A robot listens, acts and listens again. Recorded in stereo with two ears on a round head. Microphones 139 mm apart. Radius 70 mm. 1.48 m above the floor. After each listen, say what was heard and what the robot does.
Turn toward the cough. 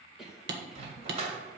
Turn 30° right.
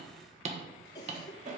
So it is at 25° left. Turn 25° left.
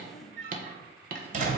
Keep listening.
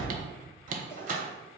Keep listening.
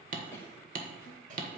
Facing where the cough came from. I can't hear it now.